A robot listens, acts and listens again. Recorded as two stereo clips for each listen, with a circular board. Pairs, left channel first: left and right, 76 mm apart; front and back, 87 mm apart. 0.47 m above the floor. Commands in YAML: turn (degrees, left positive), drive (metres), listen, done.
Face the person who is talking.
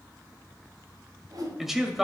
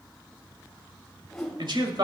turn: -175
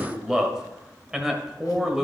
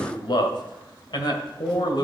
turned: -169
turn: -10
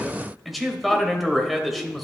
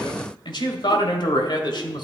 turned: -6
done: "Facing the man speaking, 1 to 2 m away."